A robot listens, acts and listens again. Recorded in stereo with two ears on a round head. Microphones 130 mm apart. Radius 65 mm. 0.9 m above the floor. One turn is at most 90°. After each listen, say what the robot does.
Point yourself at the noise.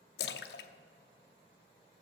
Turn 90° left.
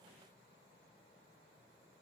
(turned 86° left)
Facing where the splash came from. I can't hear it now.